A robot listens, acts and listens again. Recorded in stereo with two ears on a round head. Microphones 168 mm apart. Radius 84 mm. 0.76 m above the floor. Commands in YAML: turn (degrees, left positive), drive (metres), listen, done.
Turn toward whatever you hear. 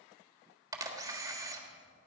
turn: -20
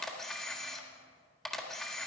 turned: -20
done: "Found it: a camera shutter, straight ahead."